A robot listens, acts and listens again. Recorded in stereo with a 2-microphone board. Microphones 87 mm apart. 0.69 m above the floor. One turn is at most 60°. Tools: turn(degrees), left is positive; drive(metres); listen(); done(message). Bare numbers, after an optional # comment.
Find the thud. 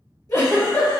listen()
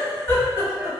# The thud: about 60° left or 120° left.
turn(60)
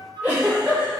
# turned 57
listen()
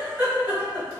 done("I heard a thud, but can't make it out now. It was about straight ahead or 65° left.")